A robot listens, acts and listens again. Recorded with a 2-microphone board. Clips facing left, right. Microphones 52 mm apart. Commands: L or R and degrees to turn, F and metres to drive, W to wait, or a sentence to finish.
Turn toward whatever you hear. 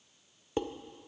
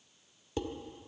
L35
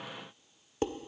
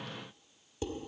L105
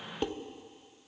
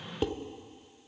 Facing the dishes clattering, under 1 m away.